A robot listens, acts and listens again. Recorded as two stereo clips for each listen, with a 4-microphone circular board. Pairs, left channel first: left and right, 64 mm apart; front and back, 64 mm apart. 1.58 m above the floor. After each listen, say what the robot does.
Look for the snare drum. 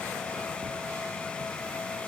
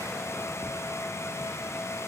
Keep listening.
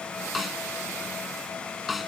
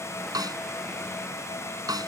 Turn 180° left.
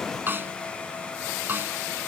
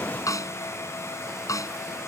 Turn 30° right.
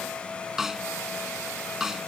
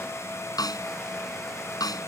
Facing the snare drum.